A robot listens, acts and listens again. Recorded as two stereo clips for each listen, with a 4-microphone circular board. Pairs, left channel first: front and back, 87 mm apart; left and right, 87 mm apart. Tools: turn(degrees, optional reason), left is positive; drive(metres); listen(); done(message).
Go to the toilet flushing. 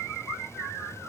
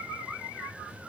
listen()
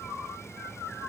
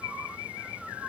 listen()
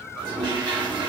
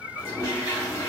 turn(degrees=145, reason="The toilet flushing: 145° left.")
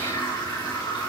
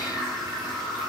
drive(metres=1.0)
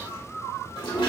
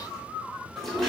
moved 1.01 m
drive(metres=1.0)
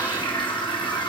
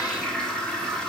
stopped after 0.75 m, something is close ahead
turn(degrees=10, reason="The toilet flushing is now 10° left.")
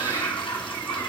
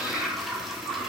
done("Arrived at the toilet flushing, straight ahead.")